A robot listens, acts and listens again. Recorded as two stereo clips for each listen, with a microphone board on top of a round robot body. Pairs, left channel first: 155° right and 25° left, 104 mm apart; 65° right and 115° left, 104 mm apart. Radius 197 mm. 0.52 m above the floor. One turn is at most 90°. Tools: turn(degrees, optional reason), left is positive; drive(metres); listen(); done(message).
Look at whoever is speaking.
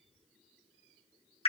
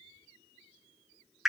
listen()
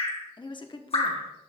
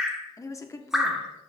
turn(degrees=-90, reason="The woman speaking: 125° right.")
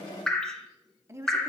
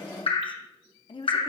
turn(degrees=-40, reason="The woman speaking is now 40° right.")
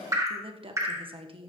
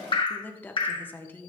done("Found it: a woman speaking, straight ahead.")